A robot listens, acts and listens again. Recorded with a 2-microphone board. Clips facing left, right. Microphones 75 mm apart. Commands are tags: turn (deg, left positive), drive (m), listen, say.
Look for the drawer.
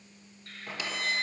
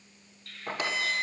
<turn deg="-45"/>
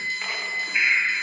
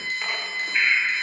<listen/>
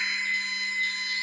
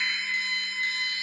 <listen/>
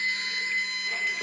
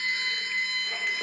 <say>I heard a drawer, but can't make it out now. It was about straight ahead or 90° right.</say>